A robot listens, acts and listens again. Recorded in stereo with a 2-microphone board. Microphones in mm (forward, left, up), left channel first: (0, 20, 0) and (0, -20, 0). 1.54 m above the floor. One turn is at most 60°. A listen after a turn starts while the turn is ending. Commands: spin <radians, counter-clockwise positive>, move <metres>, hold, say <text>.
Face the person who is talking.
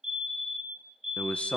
spin 0.52
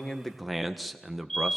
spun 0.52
say Found it: a man speaking, straight ahead, 1 to 2 m away.